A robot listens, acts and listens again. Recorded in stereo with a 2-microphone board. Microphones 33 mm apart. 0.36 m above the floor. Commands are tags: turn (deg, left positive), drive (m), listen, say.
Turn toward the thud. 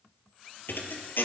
<turn deg="90"/>
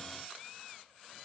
<say>I heard a thud from this way, but can't make it out now.</say>